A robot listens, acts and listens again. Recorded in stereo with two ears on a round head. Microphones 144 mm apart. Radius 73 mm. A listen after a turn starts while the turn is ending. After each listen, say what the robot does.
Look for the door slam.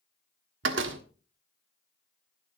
Turn 90° right.
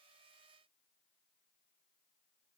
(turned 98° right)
Turn 10° left.
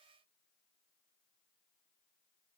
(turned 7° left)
I heard a door slam from this way, but can't make it out now.